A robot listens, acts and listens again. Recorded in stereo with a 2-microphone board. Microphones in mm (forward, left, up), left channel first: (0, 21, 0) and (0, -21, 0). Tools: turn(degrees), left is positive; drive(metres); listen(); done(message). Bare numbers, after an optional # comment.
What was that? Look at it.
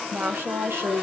turn(-90)
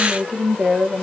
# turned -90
# So it is at 15° right.
turn(-15)
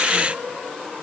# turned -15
listen()
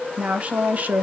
# The woman speaking is now 45° right.
turn(-45)
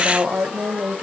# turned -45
# The woman speaking is now 45° right.
turn(-45)
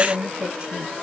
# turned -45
# The woman speaking is now 25° right.
turn(-25)
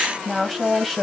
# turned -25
done("Facing the woman speaking, 1 to 2 m away.")